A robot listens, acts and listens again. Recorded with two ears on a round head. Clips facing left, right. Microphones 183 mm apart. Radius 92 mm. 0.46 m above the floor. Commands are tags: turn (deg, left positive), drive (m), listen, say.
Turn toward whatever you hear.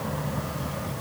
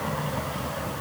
<listen/>
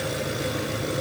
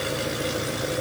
<listen/>
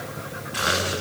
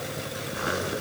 <say>I can't make out anything.</say>